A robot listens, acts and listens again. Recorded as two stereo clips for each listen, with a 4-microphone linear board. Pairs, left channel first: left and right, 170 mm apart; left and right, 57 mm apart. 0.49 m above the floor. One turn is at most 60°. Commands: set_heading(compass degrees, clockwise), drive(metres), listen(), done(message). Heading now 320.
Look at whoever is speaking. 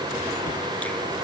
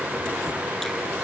listen()
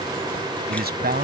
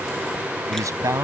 set_heading(20)
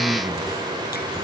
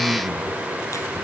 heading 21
listen()
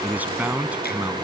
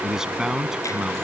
set_heading(31)
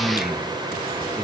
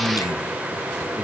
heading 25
done("Found it: a man speaking, straight ahead.")